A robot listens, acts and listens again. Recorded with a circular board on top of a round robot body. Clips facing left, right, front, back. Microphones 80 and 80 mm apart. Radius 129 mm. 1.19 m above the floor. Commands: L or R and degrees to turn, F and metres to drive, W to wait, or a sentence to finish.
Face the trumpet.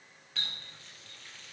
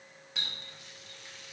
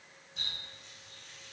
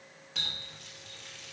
W
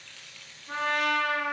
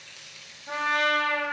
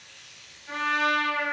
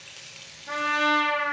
R115
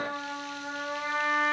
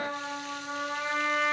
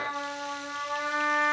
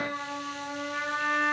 L20
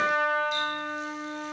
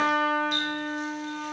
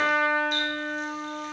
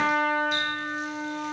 Facing the trumpet, over 4 m away.